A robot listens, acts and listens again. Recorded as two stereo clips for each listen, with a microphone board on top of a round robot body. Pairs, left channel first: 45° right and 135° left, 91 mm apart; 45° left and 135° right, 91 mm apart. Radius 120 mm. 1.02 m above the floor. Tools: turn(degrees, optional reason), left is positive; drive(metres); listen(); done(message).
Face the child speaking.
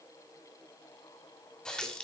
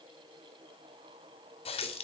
listen()
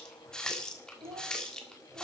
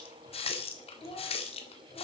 turn(degrees=80, reason="The child speaking: 80° left.")
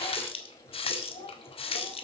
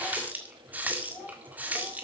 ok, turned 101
turn(degrees=-25, reason="The child speaking is now 25° right.")
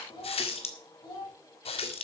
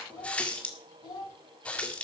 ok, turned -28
done("Facing the child speaking, over 4 m away.")